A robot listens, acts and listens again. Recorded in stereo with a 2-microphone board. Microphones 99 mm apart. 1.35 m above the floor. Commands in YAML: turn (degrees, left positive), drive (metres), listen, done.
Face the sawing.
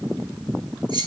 listen: true
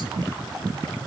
listen: true
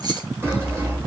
turn: -25
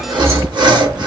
turn: -125
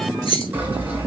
turn: -20
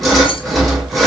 done: "Found it: sawing, straight ahead, 1 to 2 m away."